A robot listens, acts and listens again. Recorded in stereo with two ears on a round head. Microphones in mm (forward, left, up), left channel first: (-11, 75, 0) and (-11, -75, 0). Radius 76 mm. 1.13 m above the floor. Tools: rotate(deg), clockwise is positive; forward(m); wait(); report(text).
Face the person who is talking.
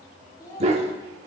rotate(-20)
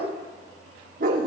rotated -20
wait()
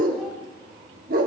wait()
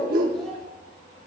report("I heard a child speaking, but can't make it out now. It was about straight ahead or 140° left.")